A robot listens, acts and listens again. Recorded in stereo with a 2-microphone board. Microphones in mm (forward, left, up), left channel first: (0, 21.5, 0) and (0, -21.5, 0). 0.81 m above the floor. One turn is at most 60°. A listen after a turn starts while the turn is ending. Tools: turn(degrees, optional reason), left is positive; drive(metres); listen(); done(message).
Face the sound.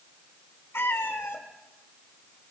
turn(degrees=60)
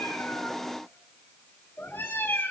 turn(degrees=60, reason="So it is at 65° left.")
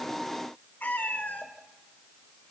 turn(degrees=50, reason="The cat meowing is now 50° left.")
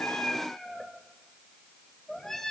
turn(degrees=15, reason="The cat meowing is now 15° left.")
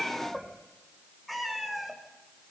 done("Found it: a cat meowing, straight ahead, 2 to 4 m away.")